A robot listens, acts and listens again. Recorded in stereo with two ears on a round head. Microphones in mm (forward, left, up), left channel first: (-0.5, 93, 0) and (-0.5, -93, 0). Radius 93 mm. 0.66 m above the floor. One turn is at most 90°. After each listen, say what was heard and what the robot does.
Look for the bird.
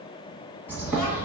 Turn 30° right.
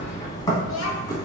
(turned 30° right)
So it is at 20° left. Turn 20° left.
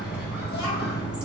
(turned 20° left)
Facing the bird, under 1 m away.